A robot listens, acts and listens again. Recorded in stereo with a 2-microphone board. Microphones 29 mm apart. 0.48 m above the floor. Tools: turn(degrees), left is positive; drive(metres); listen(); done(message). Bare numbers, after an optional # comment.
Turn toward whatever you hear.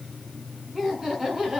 # The laughter: about 20° right or 160° right.
turn(-20)
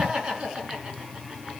# The laughter: about 35° right or 145° right.
turn(-35)
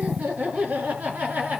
# So it is at 115° right.
turn(-115)
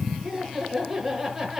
done("Found it: laughter, straight ahead.")